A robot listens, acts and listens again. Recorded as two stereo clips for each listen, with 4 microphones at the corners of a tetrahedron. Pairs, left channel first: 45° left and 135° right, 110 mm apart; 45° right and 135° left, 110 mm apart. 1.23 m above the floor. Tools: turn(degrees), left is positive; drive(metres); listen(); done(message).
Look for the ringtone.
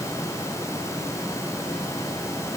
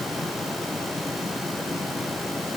listen()
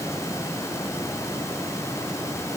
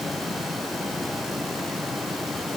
listen()
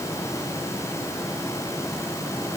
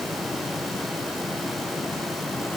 done("I can't make out a ringtone to turn to.")